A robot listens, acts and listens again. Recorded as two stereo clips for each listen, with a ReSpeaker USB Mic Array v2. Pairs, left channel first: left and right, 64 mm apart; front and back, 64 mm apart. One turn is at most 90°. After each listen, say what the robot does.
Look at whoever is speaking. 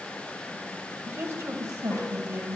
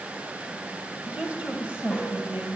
Turn 90° right.
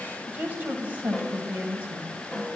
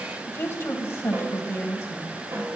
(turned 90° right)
Turn 35° right.
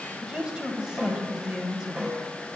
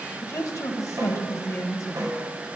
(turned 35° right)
Turn 15° right.
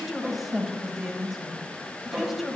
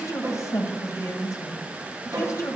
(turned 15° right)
Found it: a woman speaking, straight ahead.